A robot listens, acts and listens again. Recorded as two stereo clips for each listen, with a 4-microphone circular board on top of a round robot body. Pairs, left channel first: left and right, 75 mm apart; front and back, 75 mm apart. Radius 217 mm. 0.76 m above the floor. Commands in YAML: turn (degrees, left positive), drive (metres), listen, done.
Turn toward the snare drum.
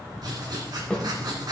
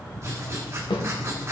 turn: 10
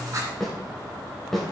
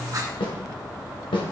done: "Found it: a snare drum, straight ahead, 2 to 4 m away."